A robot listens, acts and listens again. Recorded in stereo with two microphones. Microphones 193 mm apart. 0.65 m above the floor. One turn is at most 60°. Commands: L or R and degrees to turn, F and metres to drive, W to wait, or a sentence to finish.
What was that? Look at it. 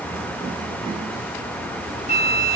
L35
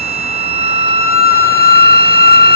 L60
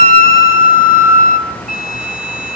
L60
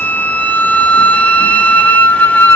L10
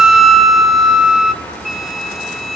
Facing the flute, 1 to 2 m away.